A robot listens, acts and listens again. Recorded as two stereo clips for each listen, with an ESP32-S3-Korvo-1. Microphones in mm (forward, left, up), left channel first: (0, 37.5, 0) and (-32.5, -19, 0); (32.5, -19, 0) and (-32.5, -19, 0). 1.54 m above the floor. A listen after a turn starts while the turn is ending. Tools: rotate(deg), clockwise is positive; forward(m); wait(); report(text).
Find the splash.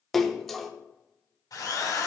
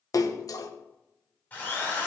rotate(25)
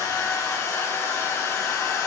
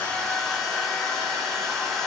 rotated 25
report("I heard a splash from this way, but can't make it out now.")